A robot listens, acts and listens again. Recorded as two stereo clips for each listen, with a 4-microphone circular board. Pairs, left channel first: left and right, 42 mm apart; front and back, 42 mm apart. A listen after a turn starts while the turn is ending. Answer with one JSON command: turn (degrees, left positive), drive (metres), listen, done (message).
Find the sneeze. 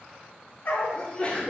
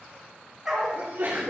{"turn": 150}
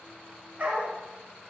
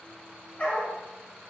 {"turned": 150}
{"done": "I heard a sneeze from this way, but can't make it out now."}